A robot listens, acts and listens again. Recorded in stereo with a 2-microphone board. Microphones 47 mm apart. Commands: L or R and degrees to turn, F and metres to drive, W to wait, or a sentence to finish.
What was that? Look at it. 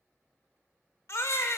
L65
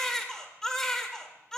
L10
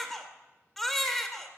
Found it: a baby crying, straight ahead.